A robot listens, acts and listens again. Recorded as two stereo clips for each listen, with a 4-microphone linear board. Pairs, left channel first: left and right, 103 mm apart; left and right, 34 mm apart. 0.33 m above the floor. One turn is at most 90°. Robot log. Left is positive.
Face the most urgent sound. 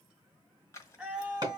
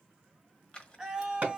cmd yaw -30
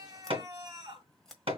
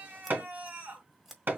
note: So it is at 140° right.
cmd yaw -90
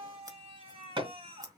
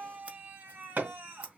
note: The scream is now 85° right.
cmd yaw -85
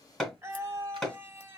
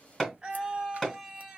note: The scream is now 25° right.
cmd yaw -25
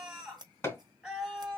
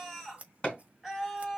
end: Found it: a scream, straight ahead.